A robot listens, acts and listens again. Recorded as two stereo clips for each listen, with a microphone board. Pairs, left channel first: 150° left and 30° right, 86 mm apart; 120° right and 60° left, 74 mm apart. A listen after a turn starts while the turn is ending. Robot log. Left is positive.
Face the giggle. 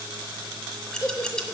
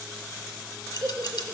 note: The giggle: 95° left.
cmd yaw +95
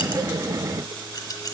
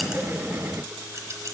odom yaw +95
cmd idle
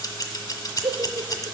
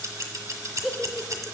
note: The giggle is now 30° right.
cmd yaw -30
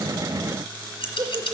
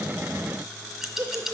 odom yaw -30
note: The giggle is now 10° left.
cmd yaw +10
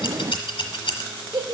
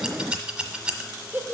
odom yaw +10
end: Found it: a giggle, straight ahead.